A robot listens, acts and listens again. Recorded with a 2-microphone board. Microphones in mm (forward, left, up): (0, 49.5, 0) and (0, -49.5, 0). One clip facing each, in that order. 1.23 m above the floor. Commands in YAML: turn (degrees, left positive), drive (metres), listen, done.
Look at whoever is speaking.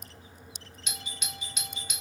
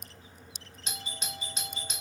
listen: true
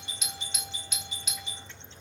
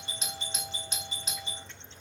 listen: true
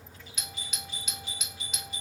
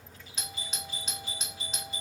done: "I can't make out anyone speaking, only a doorbell."